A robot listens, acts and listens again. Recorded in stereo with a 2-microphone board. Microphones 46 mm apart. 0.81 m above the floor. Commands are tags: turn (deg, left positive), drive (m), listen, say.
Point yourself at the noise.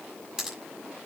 <turn deg="-30"/>
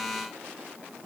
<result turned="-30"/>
<listen/>
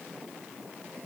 <say>I heard a pop, but can't make it out now. It was about 20° left or 140° right.</say>